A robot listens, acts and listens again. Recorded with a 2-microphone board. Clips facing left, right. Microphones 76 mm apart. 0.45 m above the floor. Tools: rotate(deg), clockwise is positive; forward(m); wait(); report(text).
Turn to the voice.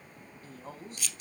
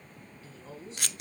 rotate(-50)
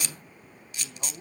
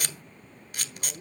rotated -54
rotate(-75)
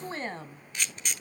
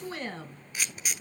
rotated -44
rotate(-35)
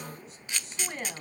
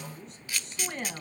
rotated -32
report("Found it: a woman speaking, straight ahead, 2 to 4 m away.")